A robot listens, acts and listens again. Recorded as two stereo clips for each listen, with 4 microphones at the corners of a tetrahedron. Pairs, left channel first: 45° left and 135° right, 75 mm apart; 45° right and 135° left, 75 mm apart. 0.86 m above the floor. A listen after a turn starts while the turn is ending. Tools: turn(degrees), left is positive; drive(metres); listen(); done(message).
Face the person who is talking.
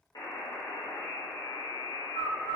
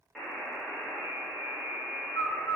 listen()
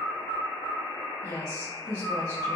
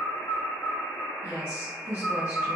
turn(degrees=75)
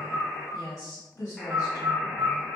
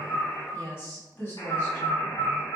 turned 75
done("Facing the woman speaking.")